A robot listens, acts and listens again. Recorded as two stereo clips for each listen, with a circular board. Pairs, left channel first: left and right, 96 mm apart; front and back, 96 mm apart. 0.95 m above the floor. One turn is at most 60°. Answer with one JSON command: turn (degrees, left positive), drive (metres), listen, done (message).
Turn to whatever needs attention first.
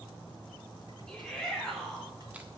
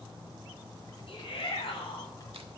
{"turn": 10}
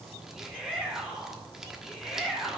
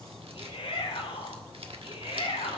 {"done": "Found it: a shout, straight ahead, 2 to 4 m away."}